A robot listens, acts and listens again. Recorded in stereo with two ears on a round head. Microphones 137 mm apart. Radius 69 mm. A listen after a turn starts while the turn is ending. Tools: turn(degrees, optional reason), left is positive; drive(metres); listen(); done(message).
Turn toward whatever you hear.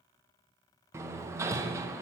turn(degrees=-20, reason="The hammering: about 20° right or 160° right.")
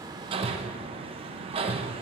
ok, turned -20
turn(degrees=-135, reason="So it is at 135° right.")
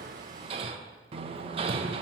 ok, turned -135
turn(degrees=-40, reason="The hammering is now 40° right.")
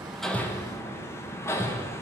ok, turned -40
turn(degrees=20, reason="The hammering is now 20° left.")
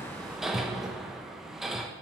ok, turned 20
done("Facing the hammering, under 1 m away.")